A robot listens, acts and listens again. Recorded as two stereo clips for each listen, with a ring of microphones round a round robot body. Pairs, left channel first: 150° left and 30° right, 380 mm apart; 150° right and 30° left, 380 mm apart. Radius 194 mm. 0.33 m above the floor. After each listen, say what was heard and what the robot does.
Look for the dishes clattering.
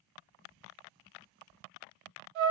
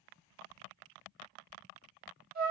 Keep listening.
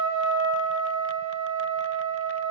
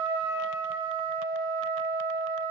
Keep listening.
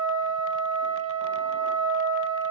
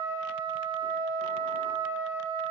I can't make out dishes clattering, only a trumpet.